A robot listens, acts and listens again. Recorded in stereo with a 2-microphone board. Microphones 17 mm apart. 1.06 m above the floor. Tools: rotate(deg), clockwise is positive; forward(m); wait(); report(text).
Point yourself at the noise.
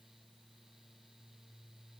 wait()
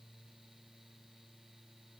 wait()
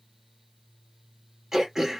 rotate(35)
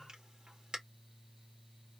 rotate(115)
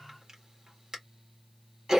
rotate(40)
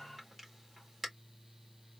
rotate(15)
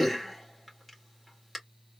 report("Facing the throat clearing, 2 to 4 m away.")